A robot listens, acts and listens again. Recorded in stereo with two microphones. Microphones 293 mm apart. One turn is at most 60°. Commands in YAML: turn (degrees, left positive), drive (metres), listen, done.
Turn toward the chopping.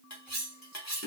listen: true
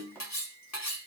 turn: 30
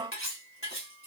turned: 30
listen: true
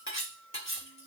listen: true
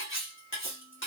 done: "I heard chopping, but can't make it out now. It was about 25° right or 145° left."